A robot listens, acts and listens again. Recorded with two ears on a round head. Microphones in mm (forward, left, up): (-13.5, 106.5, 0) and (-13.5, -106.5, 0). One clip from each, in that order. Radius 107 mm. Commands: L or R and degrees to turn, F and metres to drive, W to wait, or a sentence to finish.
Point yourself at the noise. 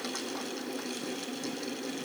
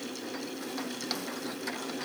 W
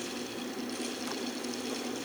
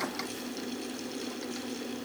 W
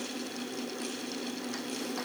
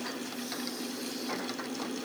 I can't make out anything.